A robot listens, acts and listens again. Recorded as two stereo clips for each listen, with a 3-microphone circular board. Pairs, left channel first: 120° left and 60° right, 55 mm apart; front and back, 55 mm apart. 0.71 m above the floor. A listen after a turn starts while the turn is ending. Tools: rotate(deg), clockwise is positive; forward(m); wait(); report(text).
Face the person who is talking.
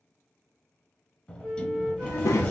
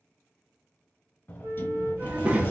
rotate(-115)
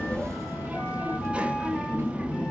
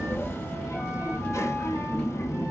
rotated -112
report("Found it: a child speaking, straight ahead, under 1 m away.")